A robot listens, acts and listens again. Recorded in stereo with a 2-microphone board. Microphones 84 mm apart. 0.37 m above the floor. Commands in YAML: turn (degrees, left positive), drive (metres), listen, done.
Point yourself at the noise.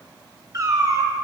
turn: -40
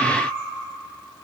listen: true
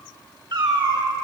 turn: -85
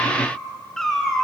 turn: 10
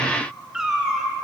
done: "Facing the cat meowing."